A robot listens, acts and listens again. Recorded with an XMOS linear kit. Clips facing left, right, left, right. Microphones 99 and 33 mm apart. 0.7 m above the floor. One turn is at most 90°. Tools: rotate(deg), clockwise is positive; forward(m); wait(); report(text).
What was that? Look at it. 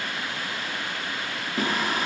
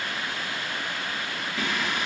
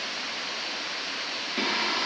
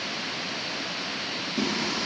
rotate(-40)
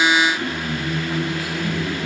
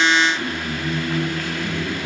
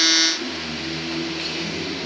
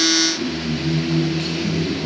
report("Facing the singing.")